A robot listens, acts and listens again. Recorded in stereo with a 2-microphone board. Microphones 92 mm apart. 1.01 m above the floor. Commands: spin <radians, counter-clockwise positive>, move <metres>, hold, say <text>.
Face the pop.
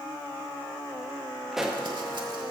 spin -0.52
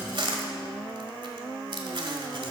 hold
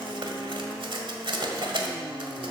say I heard a pop, but can't make it out now. It was about 25° left or 145° right.